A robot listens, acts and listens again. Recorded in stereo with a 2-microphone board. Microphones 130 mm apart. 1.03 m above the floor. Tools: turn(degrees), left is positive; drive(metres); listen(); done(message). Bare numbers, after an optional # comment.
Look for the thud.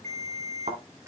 # The thud: about 65° right or 115° right.
turn(-65)
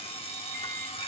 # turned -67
listen()
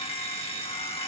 done("I heard a thud, but can't make it out now. It was about straight ahead or 50° right.")